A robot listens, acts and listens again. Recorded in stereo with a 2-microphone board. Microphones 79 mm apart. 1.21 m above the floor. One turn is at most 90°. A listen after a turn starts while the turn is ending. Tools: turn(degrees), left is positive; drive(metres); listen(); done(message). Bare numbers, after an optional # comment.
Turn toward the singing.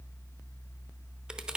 listen()
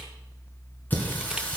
turn(30)
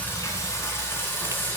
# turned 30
# The singing: about 25° left or 155° left.
turn(25)
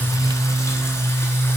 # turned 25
# The singing: about 30° left or 150° left.
turn(30)
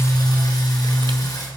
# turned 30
# So it is at 130° left.
turn(90)
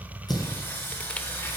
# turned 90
# The singing is now 25° left.
turn(25)
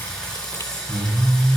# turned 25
# The singing is now 10° left.
turn(10)
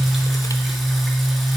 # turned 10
done("Found it: singing, straight ahead, 2 to 4 m away.")